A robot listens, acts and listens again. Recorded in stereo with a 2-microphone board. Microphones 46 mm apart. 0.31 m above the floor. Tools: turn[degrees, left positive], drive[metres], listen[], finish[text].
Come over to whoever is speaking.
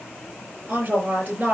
Thought: The woman speaking: about 40° right or 140° right.
Action: turn[-40]
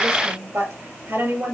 Thought: So it is at 95° right.
Action: turn[-95]
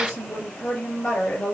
Thought: The woman speaking is now 20° left.
Action: turn[20]
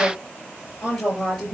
Thought: The woman speaking is now 10° left.
Action: turn[10]
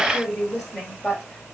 Action: drive[1.0]
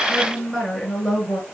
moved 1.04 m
Action: drive[1.0]
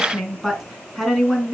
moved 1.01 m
Action: drive[1.0]
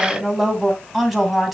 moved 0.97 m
Action: drive[1.0]
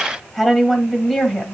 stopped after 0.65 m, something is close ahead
Action: finish[I am next to the woman speaking.]